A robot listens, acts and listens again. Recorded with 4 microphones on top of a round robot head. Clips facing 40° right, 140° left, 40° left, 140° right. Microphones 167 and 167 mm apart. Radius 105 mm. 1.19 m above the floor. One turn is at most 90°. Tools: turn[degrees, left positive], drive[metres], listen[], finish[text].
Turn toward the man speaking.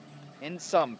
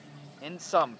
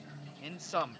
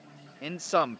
Thought: The man speaking: 115° right.
Action: turn[-90]
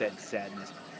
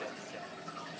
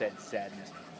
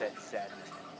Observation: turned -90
Thought: The man speaking is now 30° right.
Action: turn[-30]
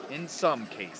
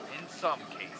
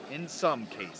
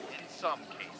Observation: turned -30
Action: finish[Facing the man speaking.]